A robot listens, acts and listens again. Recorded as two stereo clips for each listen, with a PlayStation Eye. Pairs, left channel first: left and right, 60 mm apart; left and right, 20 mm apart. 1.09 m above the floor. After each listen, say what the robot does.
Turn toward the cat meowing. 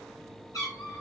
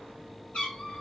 Turn 65° left.
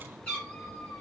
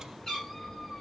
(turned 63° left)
Turn 20° left.
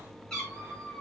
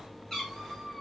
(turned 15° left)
Turn 15° left.
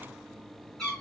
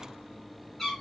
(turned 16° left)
Found it: a cat meowing, straight ahead.